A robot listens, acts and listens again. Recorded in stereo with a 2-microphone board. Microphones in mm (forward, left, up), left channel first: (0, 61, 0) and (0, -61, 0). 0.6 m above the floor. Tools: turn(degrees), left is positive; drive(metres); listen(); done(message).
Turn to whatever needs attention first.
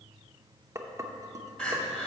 turn(degrees=30)
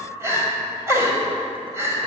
turn(degrees=-25)
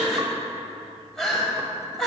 done("Found it: crying, straight ahead, 1 to 2 m away.")